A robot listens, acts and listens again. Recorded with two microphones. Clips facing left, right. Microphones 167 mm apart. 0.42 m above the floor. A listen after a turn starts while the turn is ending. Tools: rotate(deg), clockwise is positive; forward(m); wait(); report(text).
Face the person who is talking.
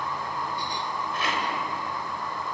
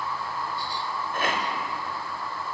wait()
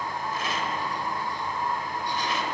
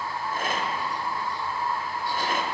wait()
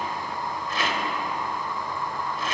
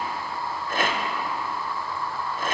report("I can't make out anyone speaking to turn to.")